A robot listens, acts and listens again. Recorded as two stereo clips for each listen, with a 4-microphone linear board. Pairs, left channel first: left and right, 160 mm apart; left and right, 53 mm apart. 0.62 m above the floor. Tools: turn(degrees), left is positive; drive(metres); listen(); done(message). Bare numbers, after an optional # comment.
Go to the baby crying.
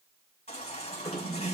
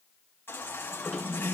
# The baby crying: about 45° left or 135° left.
turn(45)
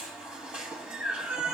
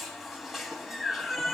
drive(1.0)
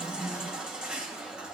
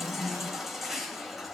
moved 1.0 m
drive(1.0)
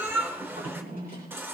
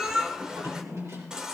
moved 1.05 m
# The baby crying is now 15° right.
turn(-15)
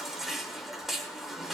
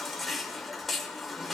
drive(1.0)
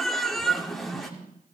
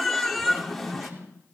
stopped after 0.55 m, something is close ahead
done("Arrived at the baby crying, straight ahead.")